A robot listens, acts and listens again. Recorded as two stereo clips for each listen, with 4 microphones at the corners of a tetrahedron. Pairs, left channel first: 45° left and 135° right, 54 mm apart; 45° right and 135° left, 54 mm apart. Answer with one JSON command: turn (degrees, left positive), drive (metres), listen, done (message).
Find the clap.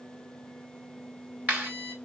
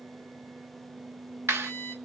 {"turn": 170}
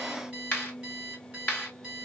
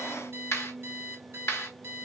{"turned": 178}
{"turn": -10}
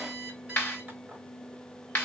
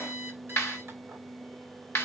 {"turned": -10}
{"done": "Found it: a clap, straight ahead, 2 to 4 m away."}